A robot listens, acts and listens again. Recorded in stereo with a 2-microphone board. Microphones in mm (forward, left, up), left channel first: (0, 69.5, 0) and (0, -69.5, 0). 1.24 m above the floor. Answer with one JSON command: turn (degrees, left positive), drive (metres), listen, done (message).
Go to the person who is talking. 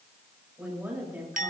{"turn": -30}
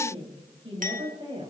{"turn": -140}
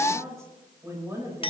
{"turn": -20}
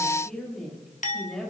{"drive": 1.0}
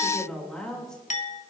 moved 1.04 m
{"drive": 1.0}
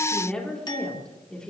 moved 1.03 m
{"drive": 1.0}
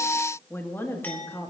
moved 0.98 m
{"turn": 15}
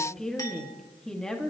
{"drive": 1.0}
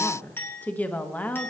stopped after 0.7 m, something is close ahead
{"turn": 10}
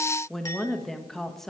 {"done": "I am next to the woman speaking."}